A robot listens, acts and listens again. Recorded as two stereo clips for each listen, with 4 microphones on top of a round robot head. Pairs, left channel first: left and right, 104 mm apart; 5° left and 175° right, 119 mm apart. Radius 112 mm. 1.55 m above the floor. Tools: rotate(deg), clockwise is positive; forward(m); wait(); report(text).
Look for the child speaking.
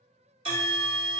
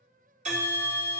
wait()
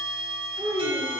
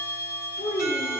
rotate(25)
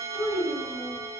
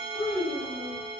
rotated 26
report("Found it: a child speaking, straight ahead, 2 to 4 m away.")